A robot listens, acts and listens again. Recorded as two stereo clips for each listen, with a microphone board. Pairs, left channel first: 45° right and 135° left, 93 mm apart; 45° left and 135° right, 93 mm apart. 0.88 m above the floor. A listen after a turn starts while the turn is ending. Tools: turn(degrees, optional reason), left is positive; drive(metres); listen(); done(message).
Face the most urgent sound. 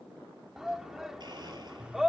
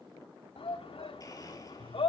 turn(degrees=50, reason="The shout: 50° left.")
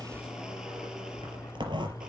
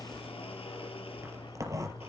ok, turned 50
listen()
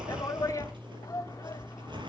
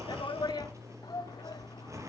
done("Facing the shout, 1 to 2 m away.")